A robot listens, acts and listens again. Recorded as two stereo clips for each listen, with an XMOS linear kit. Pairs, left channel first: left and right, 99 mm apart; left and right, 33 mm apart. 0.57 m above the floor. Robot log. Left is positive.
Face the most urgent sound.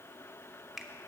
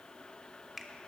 cmd idle
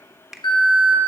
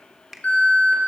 note: The alarm: about 45° left or 135° left.
cmd yaw +45
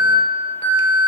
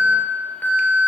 note: So it is at 75° left.
cmd yaw +75
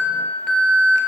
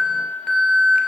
end: Facing the alarm.